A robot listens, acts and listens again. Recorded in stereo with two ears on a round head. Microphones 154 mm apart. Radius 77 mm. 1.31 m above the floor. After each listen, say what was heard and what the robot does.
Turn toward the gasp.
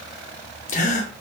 The gasp: about 45° left or 135° left. Turn 45° left.
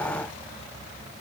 Keep listening.
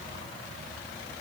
I heard a gasp, but can't make it out now. It was about straight ahead or 90° left.